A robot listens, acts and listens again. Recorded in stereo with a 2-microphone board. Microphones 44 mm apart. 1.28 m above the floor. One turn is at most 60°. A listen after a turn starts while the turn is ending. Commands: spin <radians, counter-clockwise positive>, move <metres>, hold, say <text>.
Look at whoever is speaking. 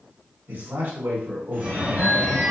spin -0.96
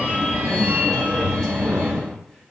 hold
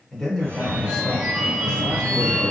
say Found it: a man speaking, straight ahead, 1 to 2 m away.